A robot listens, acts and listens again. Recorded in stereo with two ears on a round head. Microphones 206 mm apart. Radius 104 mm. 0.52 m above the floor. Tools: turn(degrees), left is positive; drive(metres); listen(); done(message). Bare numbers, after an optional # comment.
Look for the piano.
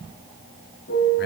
# The piano: about 45° left or 135° left.
turn(45)
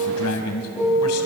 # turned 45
done("Facing the piano.")